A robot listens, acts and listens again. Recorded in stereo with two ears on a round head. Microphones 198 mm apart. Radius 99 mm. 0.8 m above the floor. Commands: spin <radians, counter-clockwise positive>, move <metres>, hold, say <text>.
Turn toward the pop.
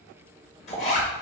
spin 0.44
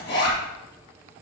hold
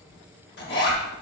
say I heard a pop, but can't make it out now. It was about straight ahead or 130° left.